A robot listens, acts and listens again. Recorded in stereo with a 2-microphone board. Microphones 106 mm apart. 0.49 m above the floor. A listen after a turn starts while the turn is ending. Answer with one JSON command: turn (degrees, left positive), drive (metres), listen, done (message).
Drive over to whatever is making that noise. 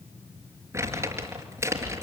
{"turn": -25}
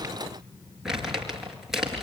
{"drive": 1.0}
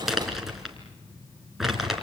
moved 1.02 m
{"drive": 1.0}
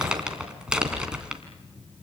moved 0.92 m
{"turn": -10}
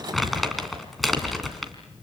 {"drive": 1.0}
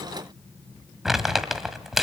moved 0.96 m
{"drive": 1.0}
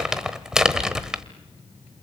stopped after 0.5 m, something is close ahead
{"done": "I am next to the crumpling."}